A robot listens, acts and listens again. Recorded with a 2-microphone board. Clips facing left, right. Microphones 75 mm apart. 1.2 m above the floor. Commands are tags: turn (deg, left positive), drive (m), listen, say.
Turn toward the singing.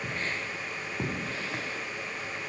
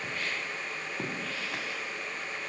<listen/>
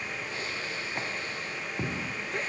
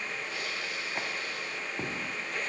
<listen/>
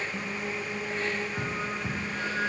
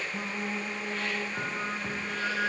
<turn deg="-30"/>
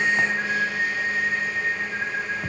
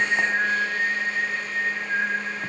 <turn deg="-145"/>
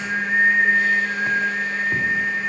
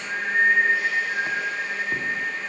<turn deg="35"/>
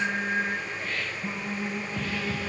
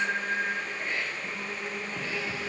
<turn deg="20"/>
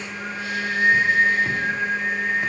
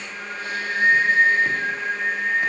<say>Found it: singing, straight ahead.</say>